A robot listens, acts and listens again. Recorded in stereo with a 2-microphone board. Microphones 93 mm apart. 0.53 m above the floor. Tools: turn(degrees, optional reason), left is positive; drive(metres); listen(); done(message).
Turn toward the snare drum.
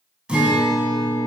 listen()
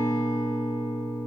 listen()
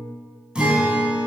done("I can't make out a snare drum, only a guitar.")